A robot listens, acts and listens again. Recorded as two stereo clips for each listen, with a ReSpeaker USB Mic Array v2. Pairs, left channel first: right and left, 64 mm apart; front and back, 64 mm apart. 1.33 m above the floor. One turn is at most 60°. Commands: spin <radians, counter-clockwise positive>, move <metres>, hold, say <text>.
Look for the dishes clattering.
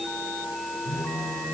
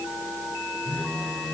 hold
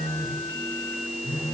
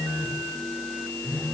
hold
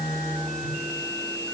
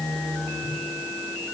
say I can't make out dishes clattering, only a phone buzzing.